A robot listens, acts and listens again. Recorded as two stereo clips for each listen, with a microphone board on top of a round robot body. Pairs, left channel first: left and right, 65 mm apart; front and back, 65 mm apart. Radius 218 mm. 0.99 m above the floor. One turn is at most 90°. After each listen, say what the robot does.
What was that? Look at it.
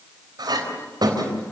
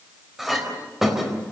Turn 90° right.
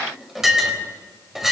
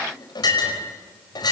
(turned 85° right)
Facing the clink.